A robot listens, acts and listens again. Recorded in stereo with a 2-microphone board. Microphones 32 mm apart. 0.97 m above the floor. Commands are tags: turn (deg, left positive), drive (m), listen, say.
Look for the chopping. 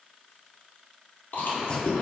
<turn deg="30"/>
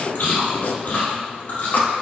<turn deg="120"/>
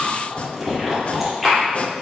<turn deg="40"/>
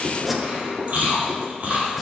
<say>Found it: chopping, straight ahead, under 1 m away.</say>